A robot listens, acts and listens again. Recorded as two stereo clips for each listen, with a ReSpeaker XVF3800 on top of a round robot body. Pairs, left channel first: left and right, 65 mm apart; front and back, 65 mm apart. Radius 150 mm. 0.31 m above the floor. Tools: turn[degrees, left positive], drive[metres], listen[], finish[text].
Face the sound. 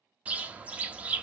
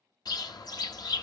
Thought: The bird: 20° right.
Action: turn[-20]
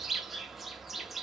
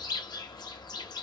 Action: finish[Facing the bird.]